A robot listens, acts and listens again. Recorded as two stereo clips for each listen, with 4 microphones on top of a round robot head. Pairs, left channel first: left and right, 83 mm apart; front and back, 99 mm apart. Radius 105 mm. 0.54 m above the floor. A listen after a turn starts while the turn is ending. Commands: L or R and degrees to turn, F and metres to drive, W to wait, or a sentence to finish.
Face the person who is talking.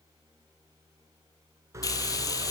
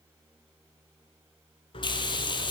W
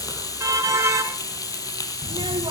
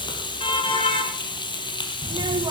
R125
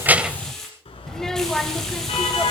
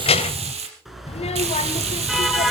Facing the child speaking, 1 to 2 m away.